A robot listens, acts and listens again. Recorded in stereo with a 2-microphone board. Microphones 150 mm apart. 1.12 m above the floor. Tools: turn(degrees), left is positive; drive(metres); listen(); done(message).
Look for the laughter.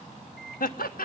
turn(degrees=90)
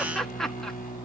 done("Found it: laughter, straight ahead.")